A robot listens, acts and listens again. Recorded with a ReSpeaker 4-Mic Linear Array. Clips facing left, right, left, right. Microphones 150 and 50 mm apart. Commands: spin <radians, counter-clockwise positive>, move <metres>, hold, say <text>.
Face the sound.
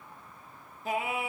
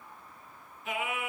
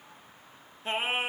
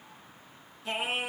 spin 0.52
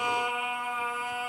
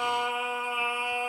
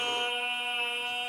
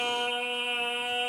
spin -0.26
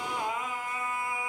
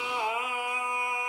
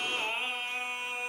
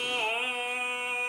spin -0.35
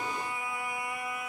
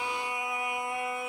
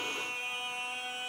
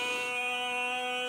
spin -0.52
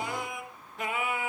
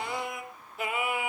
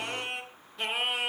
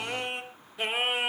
spin -0.17
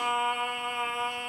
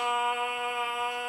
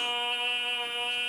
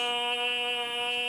say Found it: singing, straight ahead.